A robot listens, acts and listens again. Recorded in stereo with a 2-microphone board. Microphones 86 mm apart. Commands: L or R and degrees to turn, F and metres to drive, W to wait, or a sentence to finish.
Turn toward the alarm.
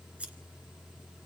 W
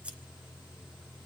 W
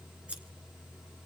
I can't make out an alarm.